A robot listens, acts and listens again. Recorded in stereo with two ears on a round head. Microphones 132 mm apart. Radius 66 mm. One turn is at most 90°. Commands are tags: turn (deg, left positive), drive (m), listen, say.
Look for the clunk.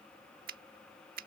<listen/>
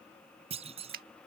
<turn deg="-45"/>
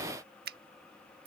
<listen/>
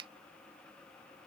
<say>I heard a clunk, but can't make it out now. It was about straight ahead or 90° right.</say>